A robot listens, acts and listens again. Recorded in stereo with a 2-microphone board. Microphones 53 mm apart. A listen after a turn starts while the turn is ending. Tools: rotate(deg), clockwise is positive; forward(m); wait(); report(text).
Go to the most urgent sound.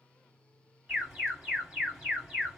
rotate(15)
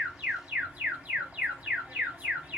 rotate(150)
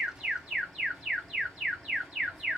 forward(1.0)
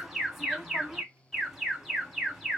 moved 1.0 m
forward(1.0)
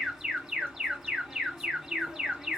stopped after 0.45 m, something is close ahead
rotate(10)
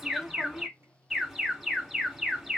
report("Arrived at the alarm, straight ahead.")